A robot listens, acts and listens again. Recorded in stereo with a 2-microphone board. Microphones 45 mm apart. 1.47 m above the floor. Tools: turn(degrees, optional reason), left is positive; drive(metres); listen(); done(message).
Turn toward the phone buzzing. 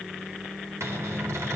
listen()
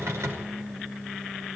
listen()
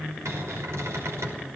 done("I can't make out a phone buzzing, only a cupboard door.")